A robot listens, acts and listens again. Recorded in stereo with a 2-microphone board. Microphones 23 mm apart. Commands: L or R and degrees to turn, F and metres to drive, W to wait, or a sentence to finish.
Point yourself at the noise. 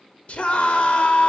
L55
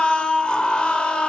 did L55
L55
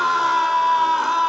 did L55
R10
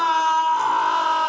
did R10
Facing the scream, 1 to 2 m away.